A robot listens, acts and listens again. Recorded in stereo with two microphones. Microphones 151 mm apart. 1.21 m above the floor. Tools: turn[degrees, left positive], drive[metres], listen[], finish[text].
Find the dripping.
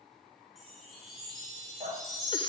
Action: turn[-90]
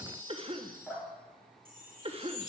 Action: finish[Found it: dripping, straight ahead, over 4 m away.]